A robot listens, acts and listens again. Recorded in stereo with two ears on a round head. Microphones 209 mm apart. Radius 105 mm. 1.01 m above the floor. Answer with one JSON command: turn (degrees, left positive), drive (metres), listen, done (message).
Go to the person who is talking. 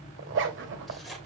{"listen": true}
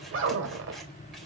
{"listen": true}
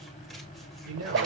{"turn": -70}
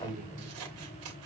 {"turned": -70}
{"turn": -35}
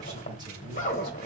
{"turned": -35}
{"listen": true}
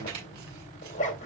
{"listen": true}
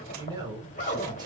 {"turn": -20}
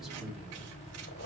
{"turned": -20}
{"drive": 1.0}
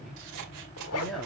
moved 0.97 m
{"drive": 1.0}
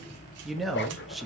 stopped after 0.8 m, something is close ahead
{"done": "I am next to the man speaking."}